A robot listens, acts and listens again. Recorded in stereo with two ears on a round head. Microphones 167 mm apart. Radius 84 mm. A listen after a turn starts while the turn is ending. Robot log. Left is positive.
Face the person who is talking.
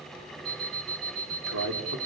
cmd yaw -90
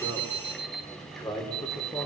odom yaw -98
note: So it is at 10° left.
cmd yaw +10
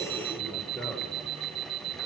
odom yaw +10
end: Found it: a man speaking, straight ahead.